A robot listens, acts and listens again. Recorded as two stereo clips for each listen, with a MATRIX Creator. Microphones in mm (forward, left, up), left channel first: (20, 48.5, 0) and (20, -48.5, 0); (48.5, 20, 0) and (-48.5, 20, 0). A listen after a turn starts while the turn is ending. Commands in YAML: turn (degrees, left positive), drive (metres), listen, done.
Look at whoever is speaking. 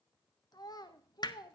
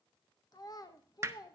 turn: 45
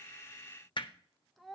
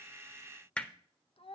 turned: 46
done: "Found it: a child speaking, straight ahead, under 1 m away."